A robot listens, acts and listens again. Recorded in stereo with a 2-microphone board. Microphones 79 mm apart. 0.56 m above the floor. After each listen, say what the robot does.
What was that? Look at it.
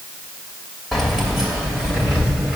Turn 30° right.
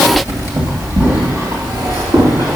Turn 125° right.
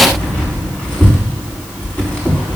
Turn 15° left.
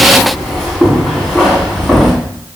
Found it: keys jangling, straight ahead.